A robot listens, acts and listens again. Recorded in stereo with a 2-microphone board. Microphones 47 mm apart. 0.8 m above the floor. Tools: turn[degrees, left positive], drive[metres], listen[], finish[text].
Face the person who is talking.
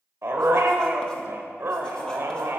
Action: listen[]
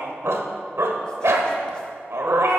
Action: listen[]
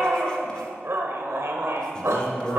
Action: turn[90]
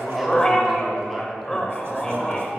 Action: finish[Facing the man speaking.]